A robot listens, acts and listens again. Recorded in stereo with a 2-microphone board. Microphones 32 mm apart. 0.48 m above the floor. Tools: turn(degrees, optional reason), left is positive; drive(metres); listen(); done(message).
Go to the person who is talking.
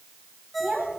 turn(degrees=-25, reason="The child speaking: about 25° right or 155° right.")
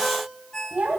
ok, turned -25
turn(degrees=-130, reason="So it is at 130° right.")
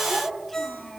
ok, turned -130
drive(metres=1.0)
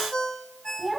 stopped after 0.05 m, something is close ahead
done("Blocked. The child speaking is further on, straight ahead.")